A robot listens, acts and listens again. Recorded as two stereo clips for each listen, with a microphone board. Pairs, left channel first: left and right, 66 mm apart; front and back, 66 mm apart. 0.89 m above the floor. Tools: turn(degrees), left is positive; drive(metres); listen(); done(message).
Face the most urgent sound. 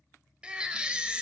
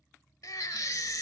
turn(degrees=-15)
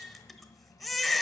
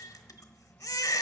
done("Found it: a baby crying, straight ahead, 1 to 2 m away.")